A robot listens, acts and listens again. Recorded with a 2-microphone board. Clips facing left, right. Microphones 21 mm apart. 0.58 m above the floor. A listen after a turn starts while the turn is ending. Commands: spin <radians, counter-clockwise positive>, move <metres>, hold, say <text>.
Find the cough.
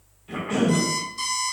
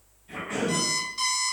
spin 0.52
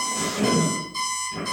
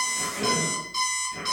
spin 0.17
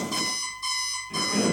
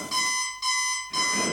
say Found it: a cough, straight ahead.